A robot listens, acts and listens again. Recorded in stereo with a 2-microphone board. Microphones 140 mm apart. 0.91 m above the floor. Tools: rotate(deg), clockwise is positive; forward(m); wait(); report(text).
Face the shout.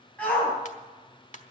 rotate(-30)
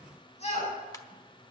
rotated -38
rotate(-135)
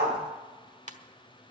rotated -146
rotate(15)
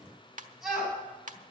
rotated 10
report("Found it: a shout, straight ahead.")